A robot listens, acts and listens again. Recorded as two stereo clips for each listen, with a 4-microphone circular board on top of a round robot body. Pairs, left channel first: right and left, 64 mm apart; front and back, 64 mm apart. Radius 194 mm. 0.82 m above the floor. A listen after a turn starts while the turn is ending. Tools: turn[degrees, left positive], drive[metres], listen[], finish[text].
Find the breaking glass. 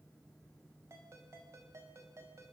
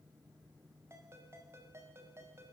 Action: listen[]
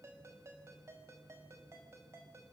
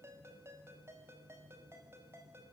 Action: listen[]
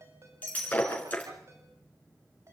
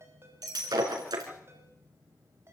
Thought: The breaking glass: 155° right.
Action: turn[-155]
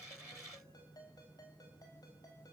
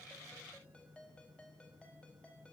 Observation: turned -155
Action: finish[Facing where the breaking glass came from. I can't hear it now.]